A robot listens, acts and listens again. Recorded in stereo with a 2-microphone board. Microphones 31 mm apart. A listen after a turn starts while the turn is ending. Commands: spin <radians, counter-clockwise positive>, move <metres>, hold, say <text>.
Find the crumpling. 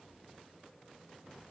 hold
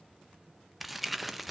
spin -0.52
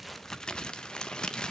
spin 0.44
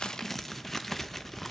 say Facing the crumpling.